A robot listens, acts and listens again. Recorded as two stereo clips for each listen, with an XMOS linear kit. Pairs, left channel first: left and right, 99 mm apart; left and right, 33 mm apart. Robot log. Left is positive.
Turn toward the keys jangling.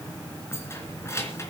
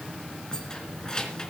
note: The keys jangling: about 25° left or 155° left.
cmd yaw +25
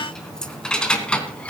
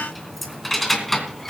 cmd yaw +30
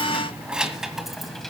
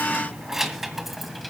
end: Found it: keys jangling, straight ahead, 1 to 2 m away.